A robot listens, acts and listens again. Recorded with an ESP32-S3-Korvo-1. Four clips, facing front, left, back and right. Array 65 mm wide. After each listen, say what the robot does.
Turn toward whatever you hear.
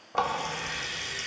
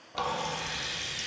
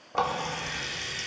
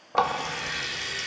Turn 85° right.
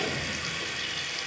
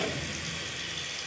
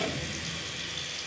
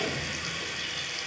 Turn 30° right.
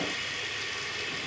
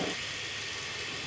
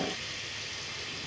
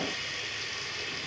Turn 10° right.
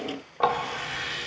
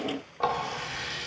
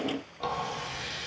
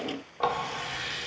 Facing the running tap, 1 to 2 m away.